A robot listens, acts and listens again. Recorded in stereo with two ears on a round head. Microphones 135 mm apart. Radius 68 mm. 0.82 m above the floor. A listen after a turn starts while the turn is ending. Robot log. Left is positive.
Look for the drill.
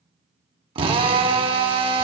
note: The drill: about 35° right or 145° right.
cmd yaw -35
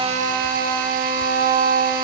note: So it is at 105° right.
cmd yaw -105
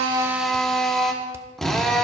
end: Facing the drill, 1 to 2 m away.